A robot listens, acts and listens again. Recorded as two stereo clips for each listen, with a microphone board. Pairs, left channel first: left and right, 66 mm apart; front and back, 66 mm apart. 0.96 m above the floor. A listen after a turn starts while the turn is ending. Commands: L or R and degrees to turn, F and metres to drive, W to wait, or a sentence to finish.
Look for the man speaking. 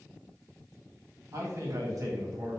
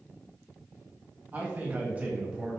R105
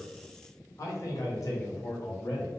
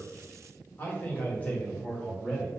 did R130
L75
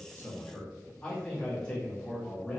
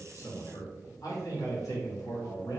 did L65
L15
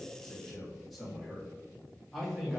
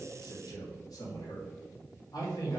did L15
Facing the man speaking.